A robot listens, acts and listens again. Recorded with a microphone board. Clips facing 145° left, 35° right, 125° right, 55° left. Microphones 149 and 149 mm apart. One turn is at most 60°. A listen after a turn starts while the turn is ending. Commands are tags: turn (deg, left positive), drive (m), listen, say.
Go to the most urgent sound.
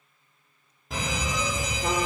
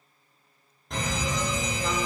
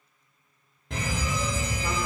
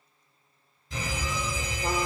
<turn deg="-60"/>
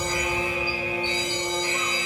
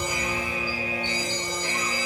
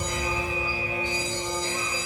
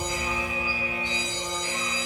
<turn deg="-60"/>
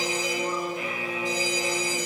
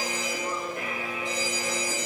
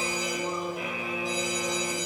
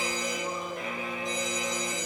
<turn deg="-40"/>
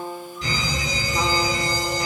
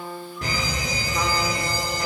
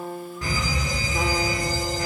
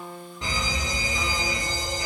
<turn deg="-10"/>
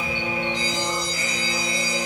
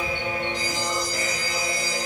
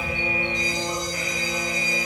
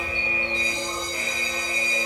<drive m="1.0"/>
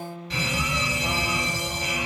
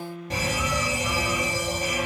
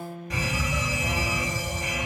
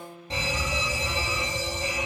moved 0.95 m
<drive m="1.0"/>
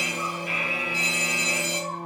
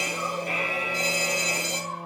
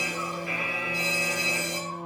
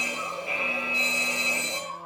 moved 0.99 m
<drive m="1.0"/>
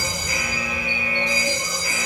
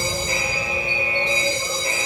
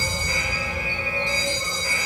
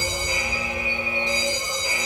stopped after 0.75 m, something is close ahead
<say>I am next to the fire alarm.</say>